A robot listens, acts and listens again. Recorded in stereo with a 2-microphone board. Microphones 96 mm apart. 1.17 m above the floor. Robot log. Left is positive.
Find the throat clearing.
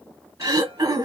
note: The throat clearing: about 45° right or 135° right.
cmd yaw -45
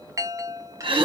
note: So it is at 85° right.
cmd yaw -85
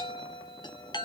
cmd idle
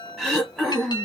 end: Found it: throat clearing, straight ahead, 2 to 4 m away.